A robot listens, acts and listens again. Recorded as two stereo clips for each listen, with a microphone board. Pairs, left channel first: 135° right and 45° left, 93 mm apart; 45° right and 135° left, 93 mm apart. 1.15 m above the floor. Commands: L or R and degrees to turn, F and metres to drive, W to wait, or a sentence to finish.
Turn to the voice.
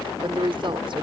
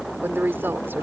L70
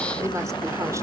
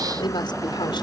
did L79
R10
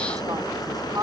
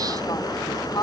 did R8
Facing the woman speaking.